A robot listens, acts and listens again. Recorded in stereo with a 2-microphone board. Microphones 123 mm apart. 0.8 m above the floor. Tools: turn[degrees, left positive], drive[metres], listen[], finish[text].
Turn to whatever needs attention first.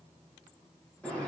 Action: listen[]
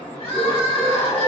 Thought: The crying: about 50° left or 130° left.
Action: turn[50]
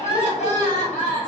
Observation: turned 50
Thought: So it is at 80° left.
Action: turn[80]
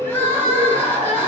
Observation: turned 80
Thought: The crying is now 15° left.
Action: turn[15]
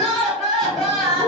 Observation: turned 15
Action: finish[Facing the crying.]